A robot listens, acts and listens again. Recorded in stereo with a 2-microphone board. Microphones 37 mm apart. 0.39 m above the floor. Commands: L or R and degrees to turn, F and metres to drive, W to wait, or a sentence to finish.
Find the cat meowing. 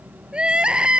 W
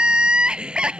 W
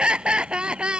I can't make out a cat meowing, only crying.